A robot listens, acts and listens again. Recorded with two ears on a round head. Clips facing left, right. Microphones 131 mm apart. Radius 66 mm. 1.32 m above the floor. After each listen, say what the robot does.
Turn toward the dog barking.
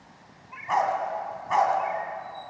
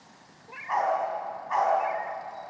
Turn 35° left.
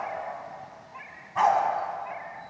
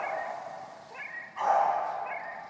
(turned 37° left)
Turn 110° left.
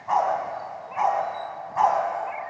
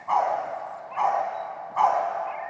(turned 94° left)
Turn 20° left.
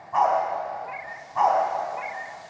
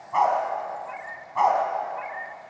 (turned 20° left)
Found it: a dog barking, straight ahead.